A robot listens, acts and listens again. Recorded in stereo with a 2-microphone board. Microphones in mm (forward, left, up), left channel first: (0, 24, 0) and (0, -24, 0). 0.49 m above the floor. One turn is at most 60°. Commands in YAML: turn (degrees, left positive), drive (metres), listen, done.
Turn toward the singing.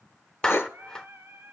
turn: -50
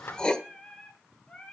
turn: 25
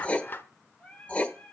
turn: 30
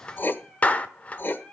turn: 25
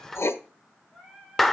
done: "Facing the singing, 2 to 4 m away."